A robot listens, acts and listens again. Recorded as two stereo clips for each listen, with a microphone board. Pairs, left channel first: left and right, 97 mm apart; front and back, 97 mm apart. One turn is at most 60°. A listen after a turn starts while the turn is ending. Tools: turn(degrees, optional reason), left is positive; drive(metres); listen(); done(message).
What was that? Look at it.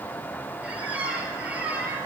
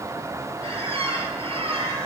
turn(degrees=-60, reason="The squeak: 165° right.")
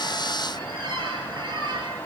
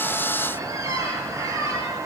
turn(degrees=-60, reason="The squeak is now 125° right.")
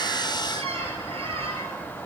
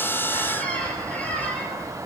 turn(degrees=-60, reason="The squeak is now 75° right.")
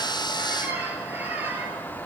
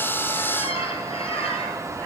turn(degrees=-20, reason="The squeak is now 20° right.")
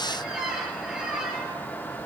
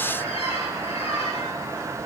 done("Facing the squeak, 2 to 4 m away.")